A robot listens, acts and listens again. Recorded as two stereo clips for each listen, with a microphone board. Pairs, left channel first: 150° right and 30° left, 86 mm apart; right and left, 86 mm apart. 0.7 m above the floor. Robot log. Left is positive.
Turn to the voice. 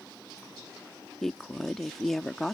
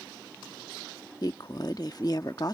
note: The woman speaking: 65° right.
cmd yaw -65
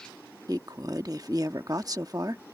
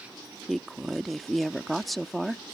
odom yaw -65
end: Found it: a woman speaking, straight ahead.